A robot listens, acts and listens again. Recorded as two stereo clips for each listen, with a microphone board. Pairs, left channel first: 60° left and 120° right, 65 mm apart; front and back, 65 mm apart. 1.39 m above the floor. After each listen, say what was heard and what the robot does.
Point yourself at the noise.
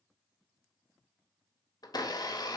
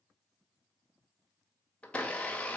The blender: 70° left. Turn 70° left.
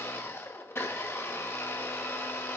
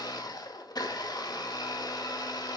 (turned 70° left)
The blender is now 10° left. Turn 10° left.
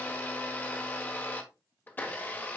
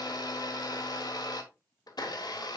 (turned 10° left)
Facing the blender, 1 to 2 m away.